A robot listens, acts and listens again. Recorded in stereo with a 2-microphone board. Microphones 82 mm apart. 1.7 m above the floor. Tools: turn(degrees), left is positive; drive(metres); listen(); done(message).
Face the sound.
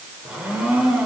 turn(degrees=-30)
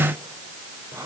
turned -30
turn(degrees=-140)
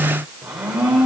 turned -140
turn(degrees=-15)
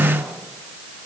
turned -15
listen()
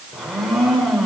done("Facing the blender, 2 to 4 m away.")